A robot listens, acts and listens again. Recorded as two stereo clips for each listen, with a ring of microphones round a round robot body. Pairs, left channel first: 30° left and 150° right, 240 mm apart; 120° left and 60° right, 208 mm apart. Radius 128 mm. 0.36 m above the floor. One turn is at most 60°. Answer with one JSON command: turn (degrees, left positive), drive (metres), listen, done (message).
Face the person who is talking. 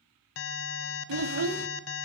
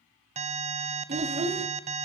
{"turn": -60}
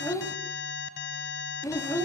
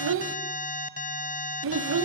{"turn": -50}
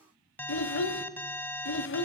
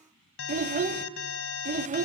{"turn": -10}
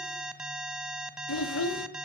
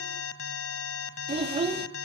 {"done": "Found it: a child speaking, straight ahead, 1 to 2 m away."}